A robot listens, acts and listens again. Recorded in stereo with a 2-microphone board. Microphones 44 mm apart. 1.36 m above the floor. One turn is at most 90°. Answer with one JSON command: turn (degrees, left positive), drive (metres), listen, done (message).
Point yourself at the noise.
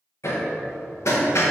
{"turn": 75}
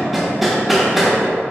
{"done": "Facing the hammering, 1 to 2 m away."}